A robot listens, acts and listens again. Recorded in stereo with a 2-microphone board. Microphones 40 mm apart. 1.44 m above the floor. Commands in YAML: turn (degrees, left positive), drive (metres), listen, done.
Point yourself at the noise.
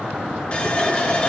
turn: 30
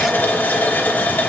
turn: 110
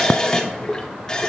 turn: 15
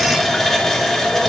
done: "Found it: a running tap, straight ahead."